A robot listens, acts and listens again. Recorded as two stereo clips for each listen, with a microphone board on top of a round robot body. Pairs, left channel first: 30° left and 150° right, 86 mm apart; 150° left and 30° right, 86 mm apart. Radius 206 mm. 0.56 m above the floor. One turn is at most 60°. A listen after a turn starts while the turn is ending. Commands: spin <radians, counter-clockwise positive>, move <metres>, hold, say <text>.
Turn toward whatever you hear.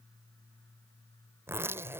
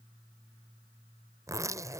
spin -1.05
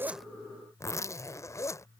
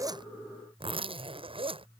spin -0.44
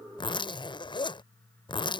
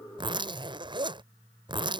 say Found it: a zipper, straight ahead.